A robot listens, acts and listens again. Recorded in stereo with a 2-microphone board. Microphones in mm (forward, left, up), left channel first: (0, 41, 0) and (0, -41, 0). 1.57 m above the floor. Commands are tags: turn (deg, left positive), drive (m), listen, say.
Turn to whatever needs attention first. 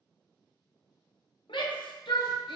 <turn deg="75"/>
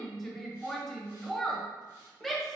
<say>Facing the shout, under 1 m away.</say>